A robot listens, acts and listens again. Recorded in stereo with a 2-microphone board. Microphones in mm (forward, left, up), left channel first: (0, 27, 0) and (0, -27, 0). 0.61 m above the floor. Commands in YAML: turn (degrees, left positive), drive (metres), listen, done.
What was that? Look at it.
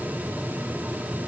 listen: true
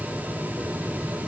listen: true
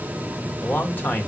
turn: 35
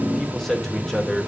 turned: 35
done: "Found it: a man speaking, straight ahead."